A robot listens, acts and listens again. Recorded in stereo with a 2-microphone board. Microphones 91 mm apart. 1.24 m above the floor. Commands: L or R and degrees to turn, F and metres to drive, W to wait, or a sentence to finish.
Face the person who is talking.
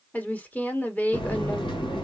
L15
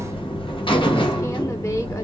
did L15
W
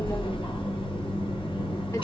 W
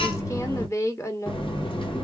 L150
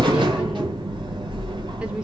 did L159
R10
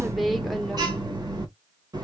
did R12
W
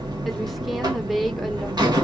Facing where the woman speaking came from. I can't hear it now.